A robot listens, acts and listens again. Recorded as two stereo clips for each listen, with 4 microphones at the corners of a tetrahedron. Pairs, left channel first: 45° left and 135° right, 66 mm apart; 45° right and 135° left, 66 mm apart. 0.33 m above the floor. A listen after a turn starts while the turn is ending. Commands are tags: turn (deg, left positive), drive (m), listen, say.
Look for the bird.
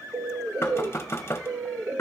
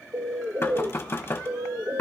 <turn deg="180"/>
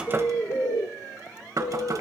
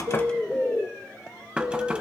<turn deg="25"/>
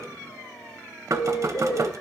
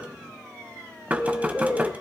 <turn deg="15"/>
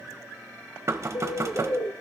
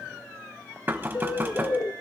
<say>Found it: a bird, straight ahead.</say>